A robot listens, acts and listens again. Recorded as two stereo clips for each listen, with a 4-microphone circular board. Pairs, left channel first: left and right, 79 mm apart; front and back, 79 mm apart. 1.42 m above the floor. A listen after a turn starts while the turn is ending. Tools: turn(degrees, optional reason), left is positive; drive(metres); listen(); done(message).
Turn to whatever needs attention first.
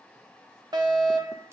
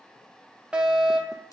turn(degrees=-105, reason="The fire alarm: 105° right.")
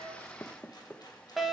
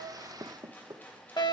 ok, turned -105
done("Facing the fire alarm, 1 to 2 m away.")